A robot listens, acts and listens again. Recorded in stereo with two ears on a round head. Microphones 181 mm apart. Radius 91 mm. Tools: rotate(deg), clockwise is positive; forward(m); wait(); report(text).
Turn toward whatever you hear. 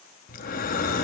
rotate(-45)
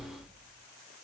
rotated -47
report("Facing the breathing, under 1 m away.")